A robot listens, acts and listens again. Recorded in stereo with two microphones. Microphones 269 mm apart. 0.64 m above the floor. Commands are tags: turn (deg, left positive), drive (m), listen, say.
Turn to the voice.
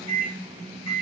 <listen/>
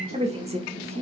<turn deg="-25"/>
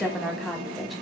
<say>Facing the woman speaking.</say>